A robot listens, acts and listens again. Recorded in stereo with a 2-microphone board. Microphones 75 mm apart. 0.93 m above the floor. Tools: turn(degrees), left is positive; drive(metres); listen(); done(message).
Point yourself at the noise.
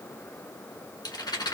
turn(degrees=70)
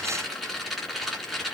done("Facing the rattle.")